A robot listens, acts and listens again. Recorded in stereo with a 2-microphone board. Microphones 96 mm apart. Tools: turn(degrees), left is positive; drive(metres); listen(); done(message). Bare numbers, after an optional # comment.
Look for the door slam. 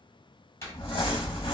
# The door slam: about 30° left or 150° left.
turn(30)
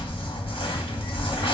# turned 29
listen()
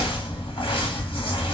done("I heard a door slam, but can't make it out now. It was about straight ahead or 120° left.")